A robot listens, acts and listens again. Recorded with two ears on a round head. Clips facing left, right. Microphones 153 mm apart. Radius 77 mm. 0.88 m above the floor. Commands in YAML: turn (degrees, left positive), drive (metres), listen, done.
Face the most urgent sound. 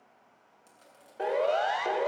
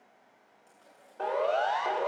turn: 20
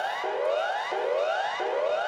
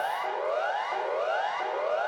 turn: 140
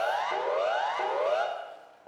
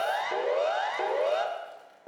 turn: -20
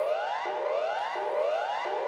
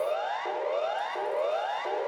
done: "Facing the siren."